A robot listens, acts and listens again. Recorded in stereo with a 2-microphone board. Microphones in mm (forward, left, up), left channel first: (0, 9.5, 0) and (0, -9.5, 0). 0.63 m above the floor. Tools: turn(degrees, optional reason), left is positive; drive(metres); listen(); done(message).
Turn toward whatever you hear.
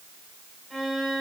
turn(degrees=-25, reason="The violin: about 25° right or 155° right.")
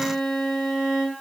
done("Facing the violin, 2 to 4 m away.")